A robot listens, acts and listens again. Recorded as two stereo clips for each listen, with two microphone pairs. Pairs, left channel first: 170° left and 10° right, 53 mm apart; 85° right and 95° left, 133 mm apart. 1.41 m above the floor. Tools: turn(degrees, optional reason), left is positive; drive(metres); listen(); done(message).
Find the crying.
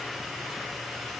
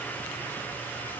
listen()
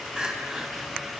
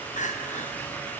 turn(degrees=-80, reason="The crying: 80° right.")
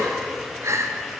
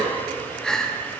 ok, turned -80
done("Found it: crying, straight ahead, under 1 m away.")